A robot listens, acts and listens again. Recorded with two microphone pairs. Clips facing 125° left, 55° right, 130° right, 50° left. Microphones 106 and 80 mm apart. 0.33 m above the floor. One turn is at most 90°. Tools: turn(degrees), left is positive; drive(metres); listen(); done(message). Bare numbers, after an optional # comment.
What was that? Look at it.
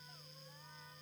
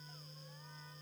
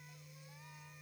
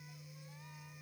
listen()
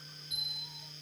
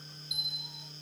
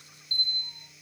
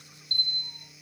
# The bell: 30° left.
turn(30)
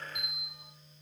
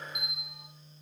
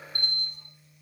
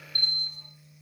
# The bell is now 25° left.
turn(25)
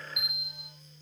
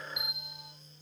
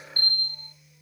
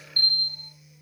# The bell is now 10° right.
turn(-10)
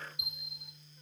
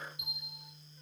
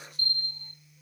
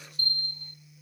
done("Facing the bell.")